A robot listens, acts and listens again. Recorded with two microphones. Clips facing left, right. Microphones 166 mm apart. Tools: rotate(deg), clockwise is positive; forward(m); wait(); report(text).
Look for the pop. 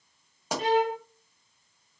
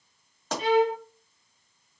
rotate(-30)
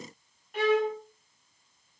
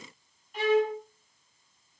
wait()
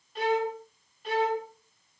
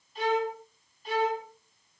report("I heard a pop, but can't make it out now. It was about 20° right or 140° left.")